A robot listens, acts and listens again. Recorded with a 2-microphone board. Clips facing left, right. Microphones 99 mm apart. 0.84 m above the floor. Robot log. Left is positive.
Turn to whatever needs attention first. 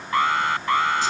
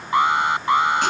note: The alarm: about 20° right or 160° right.
cmd yaw -20
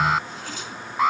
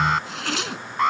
end: Facing the alarm.